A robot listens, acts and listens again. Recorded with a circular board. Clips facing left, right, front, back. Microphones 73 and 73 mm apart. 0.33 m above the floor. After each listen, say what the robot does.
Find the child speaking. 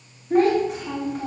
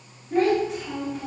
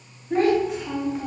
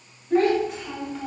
Turn 75° left.
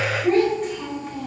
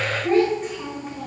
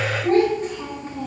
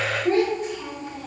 Turn 20° right.
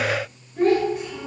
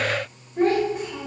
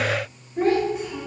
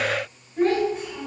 Turn 75° right.
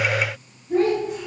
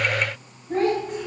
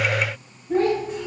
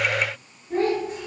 Turn 35° right.
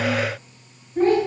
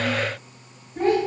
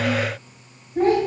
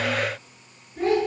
Found it: a child speaking, straight ahead, 2 to 4 m away.